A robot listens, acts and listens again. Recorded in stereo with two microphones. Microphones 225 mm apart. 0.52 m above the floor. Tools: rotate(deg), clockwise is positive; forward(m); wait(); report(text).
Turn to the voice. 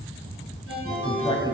rotate(-20)
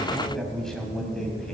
report("Facing the man speaking.")